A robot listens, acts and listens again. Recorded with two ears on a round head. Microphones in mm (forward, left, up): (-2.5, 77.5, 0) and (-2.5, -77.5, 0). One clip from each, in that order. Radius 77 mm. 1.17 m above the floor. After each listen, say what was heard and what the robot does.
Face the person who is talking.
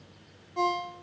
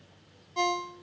Keep listening.
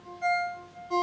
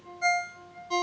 Keep listening.
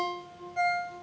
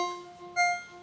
I can't make out anyone speaking, only a ringtone.